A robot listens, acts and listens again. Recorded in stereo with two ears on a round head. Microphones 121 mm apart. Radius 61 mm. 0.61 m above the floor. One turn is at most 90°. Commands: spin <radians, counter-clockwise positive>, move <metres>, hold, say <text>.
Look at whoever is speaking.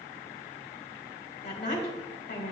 spin 0.87
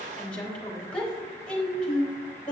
spin 0.17
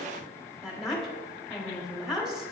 say Found it: a woman speaking, straight ahead, 1 to 2 m away.